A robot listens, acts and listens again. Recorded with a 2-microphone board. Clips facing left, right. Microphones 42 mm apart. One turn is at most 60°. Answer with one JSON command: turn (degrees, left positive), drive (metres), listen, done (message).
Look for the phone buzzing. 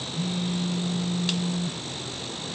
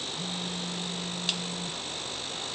{"turn": 60}
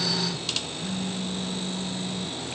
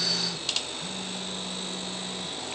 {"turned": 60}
{"turn": 10}
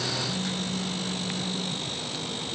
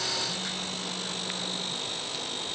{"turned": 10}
{"listen": true}
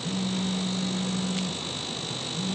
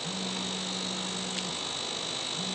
{"done": "Facing the phone buzzing."}